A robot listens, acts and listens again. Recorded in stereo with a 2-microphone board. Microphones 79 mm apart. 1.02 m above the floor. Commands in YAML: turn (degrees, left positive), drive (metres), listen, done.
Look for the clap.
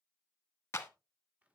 turn: 30
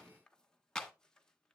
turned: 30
done: "Found it: a clap, straight ahead."